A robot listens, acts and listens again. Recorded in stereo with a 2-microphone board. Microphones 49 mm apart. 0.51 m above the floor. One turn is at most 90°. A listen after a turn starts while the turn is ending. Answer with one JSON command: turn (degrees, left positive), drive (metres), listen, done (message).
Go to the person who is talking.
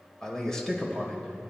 {"turn": 30}
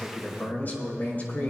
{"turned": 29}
{"turn": 90}
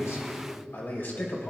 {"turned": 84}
{"turn": 55}
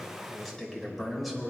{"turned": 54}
{"drive": 1.0}
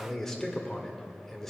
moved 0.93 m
{"turn": 10}
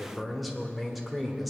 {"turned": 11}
{"drive": 1.0}
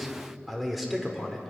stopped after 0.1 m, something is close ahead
{"done": "Arrived at the man speaking, straight ahead."}